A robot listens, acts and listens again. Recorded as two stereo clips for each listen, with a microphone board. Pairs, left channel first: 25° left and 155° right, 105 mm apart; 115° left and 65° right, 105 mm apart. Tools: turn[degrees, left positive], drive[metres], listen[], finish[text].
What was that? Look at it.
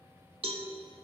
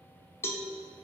Thought: The cowbell: straight behind.
Action: turn[180]
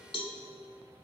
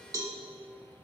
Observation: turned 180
Thought: The cowbell is now 10° right.
Action: turn[-10]
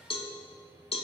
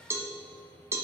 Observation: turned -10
Action: finish[Facing the cowbell, under 1 m away.]